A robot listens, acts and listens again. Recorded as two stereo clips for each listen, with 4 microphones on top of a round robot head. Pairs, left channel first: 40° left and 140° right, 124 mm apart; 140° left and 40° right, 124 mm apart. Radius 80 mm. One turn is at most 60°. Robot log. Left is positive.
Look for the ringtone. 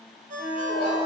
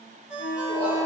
note: The ringtone: 125° right.
cmd yaw -60
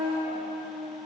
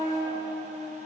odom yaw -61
note: Nothing new. It was at 65° right.
cmd yaw -60
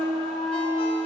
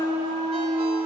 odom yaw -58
cmd idle
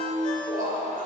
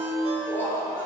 end: I heard a ringtone from this way, but can't make it out now.